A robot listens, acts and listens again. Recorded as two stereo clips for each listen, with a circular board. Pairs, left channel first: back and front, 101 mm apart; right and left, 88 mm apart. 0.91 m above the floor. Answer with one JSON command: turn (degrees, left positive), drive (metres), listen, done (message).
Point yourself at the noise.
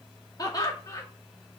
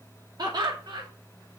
{"turn": 125}
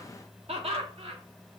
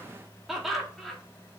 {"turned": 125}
{"done": "Facing the laughter."}